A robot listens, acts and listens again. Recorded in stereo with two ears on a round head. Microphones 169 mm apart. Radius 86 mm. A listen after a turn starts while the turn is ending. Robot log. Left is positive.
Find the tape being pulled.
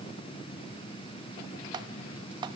cmd idle
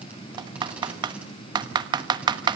cmd idle
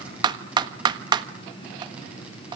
end: I can't make out tape being pulled, only typing on a keyboard.